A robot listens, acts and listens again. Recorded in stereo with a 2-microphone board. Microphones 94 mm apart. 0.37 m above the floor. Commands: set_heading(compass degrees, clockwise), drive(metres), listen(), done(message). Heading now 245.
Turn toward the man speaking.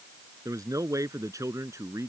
set_heading(280)
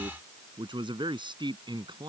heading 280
set_heading(45)
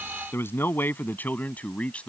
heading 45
set_heading(35)
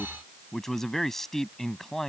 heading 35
done("Facing the man speaking.")